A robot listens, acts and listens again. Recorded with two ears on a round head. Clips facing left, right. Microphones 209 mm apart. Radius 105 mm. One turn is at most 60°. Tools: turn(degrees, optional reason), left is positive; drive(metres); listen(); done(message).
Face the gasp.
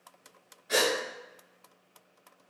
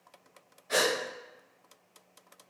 turn(degrees=15, reason="The gasp: about 15° left or 165° left.")
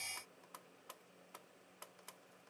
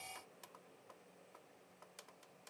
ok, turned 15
listen()
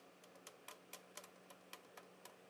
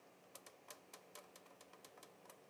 done("I heard a gasp, but can't make it out now. It was about straight ahead or 150° left.")